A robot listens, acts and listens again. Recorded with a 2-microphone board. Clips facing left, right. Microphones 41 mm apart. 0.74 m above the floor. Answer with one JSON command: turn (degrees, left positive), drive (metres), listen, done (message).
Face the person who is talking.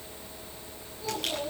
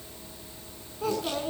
{"turn": -60}
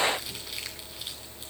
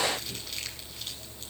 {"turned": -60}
{"listen": true}
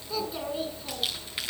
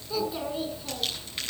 {"done": "Facing the child speaking."}